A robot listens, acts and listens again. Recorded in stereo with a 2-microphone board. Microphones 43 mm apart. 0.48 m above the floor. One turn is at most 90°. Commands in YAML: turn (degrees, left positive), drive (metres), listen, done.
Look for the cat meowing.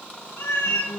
turn: 60
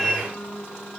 turn: 10
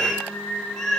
turn: 10
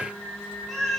done: "Found it: a cat meowing, straight ahead, 2 to 4 m away."